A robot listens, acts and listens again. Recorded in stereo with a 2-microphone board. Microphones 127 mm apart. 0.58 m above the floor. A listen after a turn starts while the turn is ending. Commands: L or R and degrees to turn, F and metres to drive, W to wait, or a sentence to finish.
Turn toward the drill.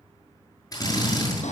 L30
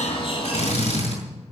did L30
L120
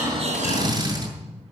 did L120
R30
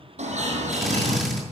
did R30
Found it: a drill, straight ahead.